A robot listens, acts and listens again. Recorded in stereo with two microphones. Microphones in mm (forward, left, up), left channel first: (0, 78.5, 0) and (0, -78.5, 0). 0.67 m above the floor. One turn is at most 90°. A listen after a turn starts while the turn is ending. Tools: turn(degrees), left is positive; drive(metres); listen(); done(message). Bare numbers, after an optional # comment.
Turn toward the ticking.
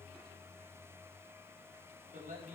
listen()
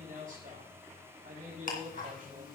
# The ticking: about 60° left or 120° left.
turn(60)
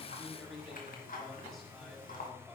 # So it is at 60° left.
turn(60)
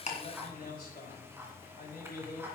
# The ticking is now 15° right.
turn(-15)
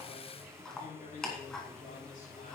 done("Facing the ticking.")